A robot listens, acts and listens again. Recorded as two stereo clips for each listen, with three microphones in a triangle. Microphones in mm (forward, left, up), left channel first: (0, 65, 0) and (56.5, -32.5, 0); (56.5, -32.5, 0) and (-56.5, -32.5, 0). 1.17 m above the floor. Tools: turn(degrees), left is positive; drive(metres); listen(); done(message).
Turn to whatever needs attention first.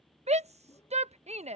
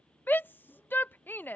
turn(degrees=-75)
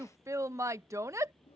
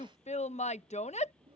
done("Facing the shout.")